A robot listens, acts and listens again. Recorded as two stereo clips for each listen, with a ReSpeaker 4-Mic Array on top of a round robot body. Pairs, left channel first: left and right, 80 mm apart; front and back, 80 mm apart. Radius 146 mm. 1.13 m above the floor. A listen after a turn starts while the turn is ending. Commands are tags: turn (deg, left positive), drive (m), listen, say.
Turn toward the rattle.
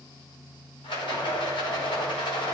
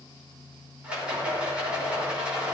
<turn deg="100"/>
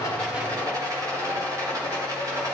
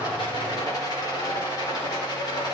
<turn deg="-45"/>
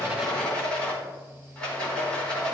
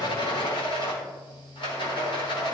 <turn deg="15"/>
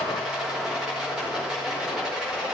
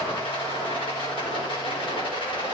<say>Facing the rattle, over 4 m away.</say>